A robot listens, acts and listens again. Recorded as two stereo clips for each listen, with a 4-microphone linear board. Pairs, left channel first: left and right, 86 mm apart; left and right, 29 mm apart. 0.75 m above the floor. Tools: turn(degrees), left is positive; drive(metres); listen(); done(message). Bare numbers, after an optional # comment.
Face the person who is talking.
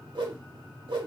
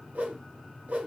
listen()
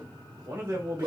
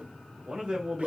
# The man speaking: about 40° right or 140° right.
turn(-40)
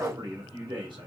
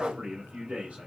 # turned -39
# So it is at 95° right.
turn(-95)
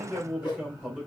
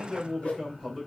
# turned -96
done("Found it: a man speaking, straight ahead, 2 to 4 m away.")